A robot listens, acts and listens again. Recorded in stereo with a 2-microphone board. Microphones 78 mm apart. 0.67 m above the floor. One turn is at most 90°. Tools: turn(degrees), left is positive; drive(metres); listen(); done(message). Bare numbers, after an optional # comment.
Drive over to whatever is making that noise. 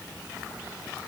listen()
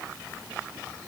listen()
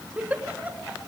# The giggle: about 20° right or 160° right.
turn(-20)
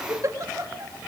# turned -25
# So it is at 135° right.
turn(-90)
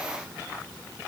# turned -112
# Nothing new. It was at 25° right.
turn(-25)
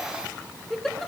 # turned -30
drive(1.0)
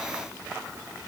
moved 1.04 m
listen()
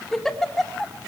drive(1.0)
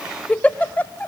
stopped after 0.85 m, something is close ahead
# The giggle is now 20° left.
turn(20)
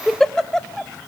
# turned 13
done("Arrived at the giggle, straight ahead.")